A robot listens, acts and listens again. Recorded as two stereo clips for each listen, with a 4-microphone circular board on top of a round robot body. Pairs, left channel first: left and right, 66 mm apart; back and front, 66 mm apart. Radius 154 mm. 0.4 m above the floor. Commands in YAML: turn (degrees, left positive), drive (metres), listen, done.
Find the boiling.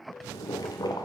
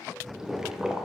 turn: 80
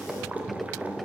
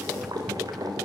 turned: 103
turn: -20
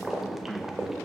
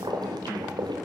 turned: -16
done: "Found it: boiling, straight ahead."